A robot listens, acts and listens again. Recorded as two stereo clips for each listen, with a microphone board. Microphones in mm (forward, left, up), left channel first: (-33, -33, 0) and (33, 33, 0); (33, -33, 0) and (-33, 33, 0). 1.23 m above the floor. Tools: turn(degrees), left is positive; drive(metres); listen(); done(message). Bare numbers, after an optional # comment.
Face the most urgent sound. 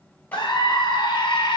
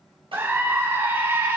# The scream: 160° right.
turn(-160)
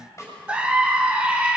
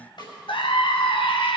# The scream is now 30° right.
turn(-30)
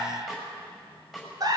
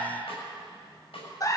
done("Facing the scream, 1 to 2 m away.")